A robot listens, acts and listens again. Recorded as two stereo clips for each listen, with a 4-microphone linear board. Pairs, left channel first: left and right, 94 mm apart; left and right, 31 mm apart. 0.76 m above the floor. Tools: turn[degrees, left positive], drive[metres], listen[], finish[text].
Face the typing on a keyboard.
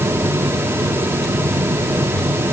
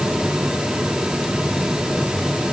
Action: listen[]
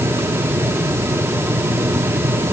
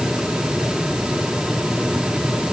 Action: listen[]
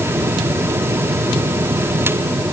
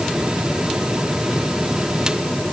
Action: finish[I can't make out typing on a keyboard.]